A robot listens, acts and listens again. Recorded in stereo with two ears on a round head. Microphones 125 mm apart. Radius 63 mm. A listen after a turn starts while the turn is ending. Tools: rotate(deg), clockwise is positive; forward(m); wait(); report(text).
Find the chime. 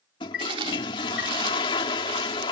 rotate(-90)
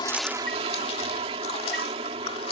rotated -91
wait()
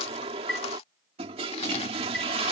report("Facing the chime.")